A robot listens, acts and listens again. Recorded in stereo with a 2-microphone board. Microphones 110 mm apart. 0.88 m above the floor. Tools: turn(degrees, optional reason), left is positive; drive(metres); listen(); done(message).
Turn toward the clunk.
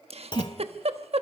turn(degrees=45, reason="The clunk: about 45° left or 135° left.")
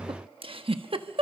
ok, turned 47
listen()
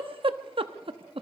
done("I heard a clunk, but can't make it out now. It was about 5° right or 90° left.")